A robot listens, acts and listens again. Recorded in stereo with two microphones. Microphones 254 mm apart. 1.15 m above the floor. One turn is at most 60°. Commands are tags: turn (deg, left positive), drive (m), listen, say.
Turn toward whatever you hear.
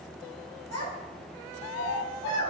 <turn deg="60"/>
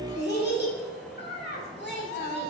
<turn deg="40"/>
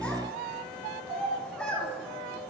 <say>Facing the child speaking, 2 to 4 m away.</say>